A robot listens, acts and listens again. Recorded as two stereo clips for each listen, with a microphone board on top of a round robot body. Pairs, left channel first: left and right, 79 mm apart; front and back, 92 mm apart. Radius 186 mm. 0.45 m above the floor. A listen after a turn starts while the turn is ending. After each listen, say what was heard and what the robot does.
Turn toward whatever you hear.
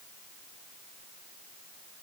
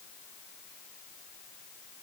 Keep listening.
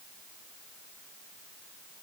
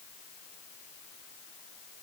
Keep listening.
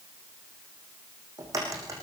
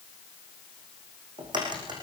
The crack: 140° right. Turn 140° right.
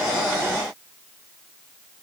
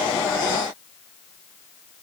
I heard a crack from this way, but can't make it out now.